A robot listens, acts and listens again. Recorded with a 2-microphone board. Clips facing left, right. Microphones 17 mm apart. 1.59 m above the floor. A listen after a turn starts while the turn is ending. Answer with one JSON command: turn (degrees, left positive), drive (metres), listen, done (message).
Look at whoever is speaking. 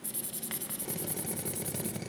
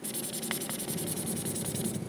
{"listen": true}
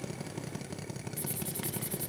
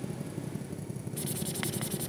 {"listen": true}
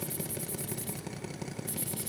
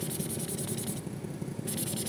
{"done": "I can't make out anyone speaking to turn to."}